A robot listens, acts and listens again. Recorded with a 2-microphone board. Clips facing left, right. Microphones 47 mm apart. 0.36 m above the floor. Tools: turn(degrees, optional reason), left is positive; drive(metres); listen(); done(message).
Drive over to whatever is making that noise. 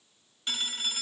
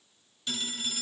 turn(degrees=35, reason="The phone ringing: about 35° left or 145° left.")
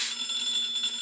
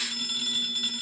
drive(metres=1.0)
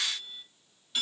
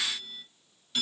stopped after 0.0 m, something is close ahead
done("Blocked. The phone ringing is further on, straight ahead.")